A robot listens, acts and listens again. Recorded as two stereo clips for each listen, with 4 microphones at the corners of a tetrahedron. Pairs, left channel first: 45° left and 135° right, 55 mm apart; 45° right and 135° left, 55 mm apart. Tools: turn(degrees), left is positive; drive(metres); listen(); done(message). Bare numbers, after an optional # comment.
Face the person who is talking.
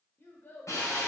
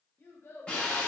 done("Found it: a child speaking, straight ahead, 1 to 2 m away.")